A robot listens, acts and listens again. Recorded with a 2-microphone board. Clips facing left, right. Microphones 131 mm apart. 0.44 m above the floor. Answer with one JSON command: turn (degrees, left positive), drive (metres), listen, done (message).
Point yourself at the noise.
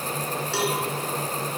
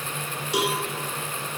{"turn": -15}
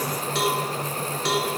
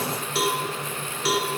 {"done": "Facing the cowbell, 2 to 4 m away."}